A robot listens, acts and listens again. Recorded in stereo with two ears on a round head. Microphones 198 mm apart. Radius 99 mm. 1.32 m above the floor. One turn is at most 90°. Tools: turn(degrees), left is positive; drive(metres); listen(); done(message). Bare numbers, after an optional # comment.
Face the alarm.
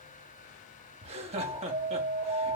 turn(-30)
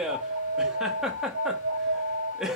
# So it is at 145° right.
turn(-90)
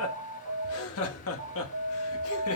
# The alarm is now 60° right.
turn(-60)
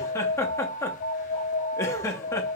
# The alarm is now 20° left.
turn(20)
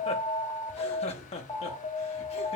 done("Found it: an alarm, straight ahead, 1 to 2 m away.")